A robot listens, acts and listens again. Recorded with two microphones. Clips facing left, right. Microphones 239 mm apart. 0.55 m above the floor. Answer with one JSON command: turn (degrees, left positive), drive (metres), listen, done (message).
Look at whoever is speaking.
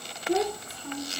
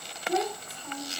{"turn": 30}
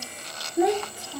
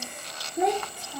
{"done": "Facing the child speaking."}